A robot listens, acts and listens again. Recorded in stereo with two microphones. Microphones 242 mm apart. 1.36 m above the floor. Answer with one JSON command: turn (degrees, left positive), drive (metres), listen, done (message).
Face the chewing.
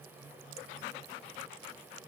{"listen": true}
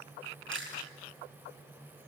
{"turn": -55}
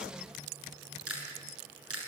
{"turn": -70}
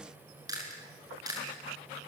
{"turn": -15}
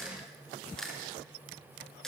{"done": "Found it: chewing, straight ahead, over 4 m away."}